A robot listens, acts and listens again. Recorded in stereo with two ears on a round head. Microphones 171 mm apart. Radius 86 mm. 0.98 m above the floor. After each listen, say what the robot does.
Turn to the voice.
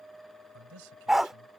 Turn 90° right.
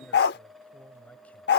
Turn 10° left.
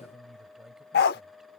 Facing the man speaking.